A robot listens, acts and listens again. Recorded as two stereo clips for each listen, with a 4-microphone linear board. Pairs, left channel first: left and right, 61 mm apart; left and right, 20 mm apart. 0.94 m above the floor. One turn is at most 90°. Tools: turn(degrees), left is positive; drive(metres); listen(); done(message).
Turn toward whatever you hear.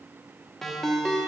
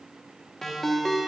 turn(degrees=30)
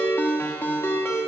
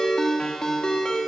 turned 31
turn(degrees=90)
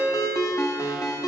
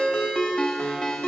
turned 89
turn(degrees=55)
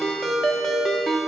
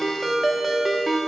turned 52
done("Facing the ringtone.")